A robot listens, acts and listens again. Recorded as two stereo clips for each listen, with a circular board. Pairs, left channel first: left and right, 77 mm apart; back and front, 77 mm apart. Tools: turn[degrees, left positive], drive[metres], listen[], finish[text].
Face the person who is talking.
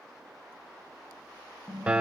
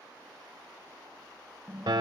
Action: listen[]
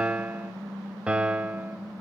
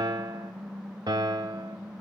Action: listen[]
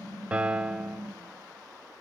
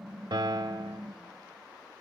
Action: finish[I can't make out anyone speaking to turn to.]